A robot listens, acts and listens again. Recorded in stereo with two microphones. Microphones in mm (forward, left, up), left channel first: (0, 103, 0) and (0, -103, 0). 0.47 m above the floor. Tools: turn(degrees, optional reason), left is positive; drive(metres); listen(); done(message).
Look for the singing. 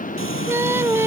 turn(degrees=-30)
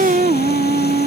turn(degrees=-140, reason="So it is at 140° right.")
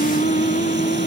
turn(degrees=35, reason="The singing is now 35° left.")
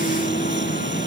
listen()
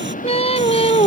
turn(degrees=30, reason="The singing is now 30° left.")
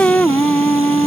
done("Facing the singing.")